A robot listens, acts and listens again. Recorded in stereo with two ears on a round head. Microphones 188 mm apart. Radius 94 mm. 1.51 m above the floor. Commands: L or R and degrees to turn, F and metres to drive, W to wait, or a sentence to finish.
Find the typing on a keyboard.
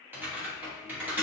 R30
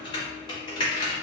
L20
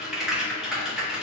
Found it: typing on a keyboard, straight ahead, 1 to 2 m away.